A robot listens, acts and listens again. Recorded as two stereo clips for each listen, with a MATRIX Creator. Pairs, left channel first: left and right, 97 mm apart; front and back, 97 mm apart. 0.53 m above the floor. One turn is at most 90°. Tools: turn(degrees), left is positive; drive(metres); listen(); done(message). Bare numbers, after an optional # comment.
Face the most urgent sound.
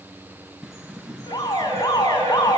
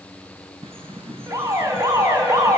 # The alarm: 130° left.
turn(90)
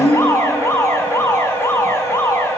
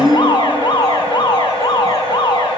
# The alarm is now 35° left.
turn(35)
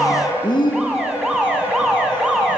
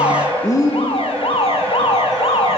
done("Found it: an alarm, straight ahead, over 4 m away.")